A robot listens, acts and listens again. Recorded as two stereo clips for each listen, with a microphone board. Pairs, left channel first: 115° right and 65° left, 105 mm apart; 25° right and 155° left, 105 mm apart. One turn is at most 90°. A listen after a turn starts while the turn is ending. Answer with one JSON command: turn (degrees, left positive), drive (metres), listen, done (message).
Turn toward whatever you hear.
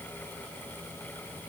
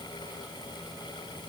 {"listen": true}
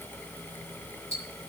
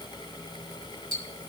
{"turn": -90}
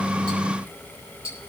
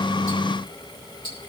{"turn": -55}
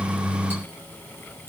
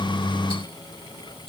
{"done": "Facing the ticking."}